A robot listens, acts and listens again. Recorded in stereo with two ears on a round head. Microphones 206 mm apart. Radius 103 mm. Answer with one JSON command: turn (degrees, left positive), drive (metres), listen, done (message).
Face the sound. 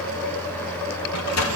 {"turn": 75}
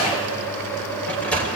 {"done": "Found it: a sliding door, straight ahead, 2 to 4 m away."}